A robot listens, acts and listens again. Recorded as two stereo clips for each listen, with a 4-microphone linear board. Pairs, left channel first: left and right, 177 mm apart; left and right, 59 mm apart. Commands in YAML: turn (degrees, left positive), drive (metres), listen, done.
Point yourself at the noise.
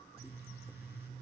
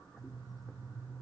listen: true
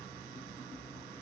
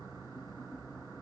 listen: true
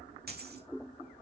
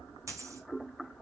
turn: -65
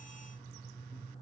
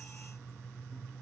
listen: true
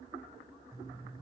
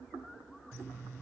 done: "I heard a dropped coin, but can't make it out now. It was about straight ahead or 50° right."